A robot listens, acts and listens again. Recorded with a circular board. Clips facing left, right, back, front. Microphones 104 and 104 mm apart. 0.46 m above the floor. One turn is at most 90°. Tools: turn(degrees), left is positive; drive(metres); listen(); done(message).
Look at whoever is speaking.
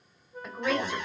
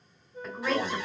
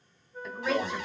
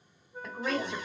turn(degrees=10)
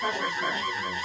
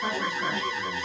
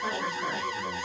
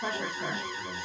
turn(degrees=-10)
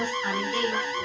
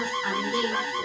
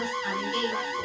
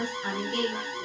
turn(degrees=-20)
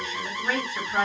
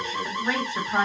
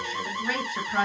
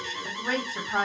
turn(degrees=-40)
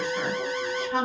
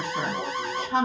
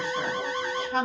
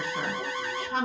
turn(degrees=-30)
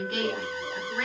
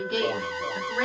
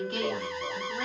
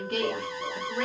turn(degrees=-10)
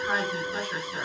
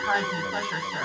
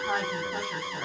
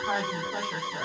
done("Found it: a woman speaking, straight ahead.")